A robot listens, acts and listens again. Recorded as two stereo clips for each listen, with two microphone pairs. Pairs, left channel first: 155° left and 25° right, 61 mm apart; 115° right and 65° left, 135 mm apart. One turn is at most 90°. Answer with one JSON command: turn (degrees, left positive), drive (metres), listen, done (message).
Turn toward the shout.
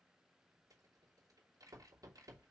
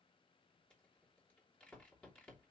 {"listen": true}
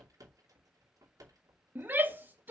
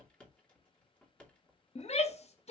{"turn": -85}
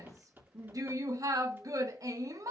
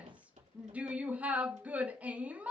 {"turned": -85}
{"turn": -15}
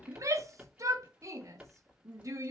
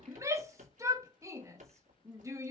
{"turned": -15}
{"done": "Found it: a shout, straight ahead, 1 to 2 m away."}